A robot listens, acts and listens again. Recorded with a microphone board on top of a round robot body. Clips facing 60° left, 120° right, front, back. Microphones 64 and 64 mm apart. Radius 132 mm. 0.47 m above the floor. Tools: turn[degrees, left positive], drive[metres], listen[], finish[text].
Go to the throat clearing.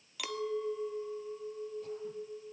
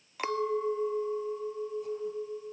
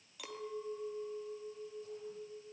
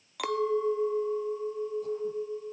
Action: listen[]
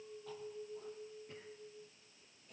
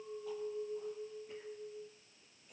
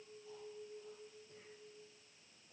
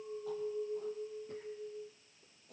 Action: listen[]
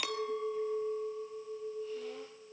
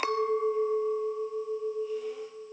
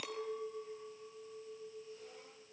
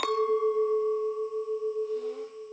Action: finish[I can't make out throat clearing to turn to.]